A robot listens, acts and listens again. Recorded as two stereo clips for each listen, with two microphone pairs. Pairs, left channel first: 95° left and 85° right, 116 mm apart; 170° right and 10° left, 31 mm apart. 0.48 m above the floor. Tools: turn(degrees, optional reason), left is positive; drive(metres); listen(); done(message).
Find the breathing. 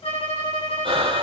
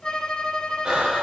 turn(degrees=-45, reason="The breathing: 45° right.")
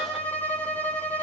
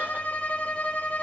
listen()
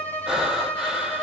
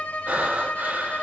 done("Facing the breathing.")